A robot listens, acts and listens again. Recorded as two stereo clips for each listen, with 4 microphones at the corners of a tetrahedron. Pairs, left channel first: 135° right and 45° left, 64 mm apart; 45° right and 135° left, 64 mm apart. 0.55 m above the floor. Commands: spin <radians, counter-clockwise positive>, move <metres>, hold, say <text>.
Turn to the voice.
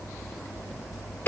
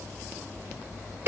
hold
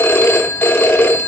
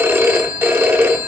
hold
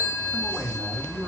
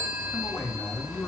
spin 0.17
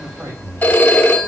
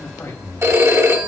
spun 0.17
say Facing the man speaking, 2 to 4 m away.